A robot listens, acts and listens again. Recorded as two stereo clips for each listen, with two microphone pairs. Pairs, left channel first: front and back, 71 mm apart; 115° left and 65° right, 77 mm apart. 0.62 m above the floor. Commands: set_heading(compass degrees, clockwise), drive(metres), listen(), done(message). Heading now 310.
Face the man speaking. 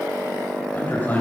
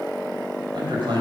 set_heading(15)
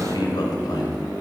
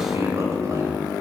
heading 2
set_heading(22)
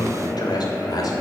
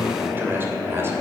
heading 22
set_heading(32)
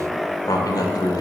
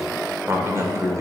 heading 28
set_heading(48)
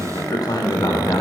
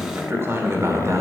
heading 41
set_heading(61)
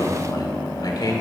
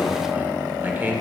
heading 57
done("Facing the man speaking.")